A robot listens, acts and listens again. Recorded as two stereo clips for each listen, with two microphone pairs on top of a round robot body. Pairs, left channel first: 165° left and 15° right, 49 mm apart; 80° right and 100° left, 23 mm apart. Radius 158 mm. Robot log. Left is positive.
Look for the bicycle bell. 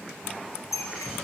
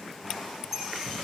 note: The bicycle bell: 170° left.
cmd yaw +170
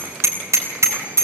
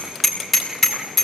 end: Found it: a bicycle bell, straight ahead, over 4 m away.